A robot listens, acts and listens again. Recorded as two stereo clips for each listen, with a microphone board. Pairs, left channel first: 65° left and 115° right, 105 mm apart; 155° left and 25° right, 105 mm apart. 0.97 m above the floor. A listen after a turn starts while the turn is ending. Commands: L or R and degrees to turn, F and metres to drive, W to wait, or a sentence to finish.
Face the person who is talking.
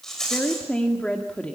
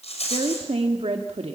R10
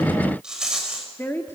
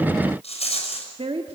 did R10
Facing the woman speaking.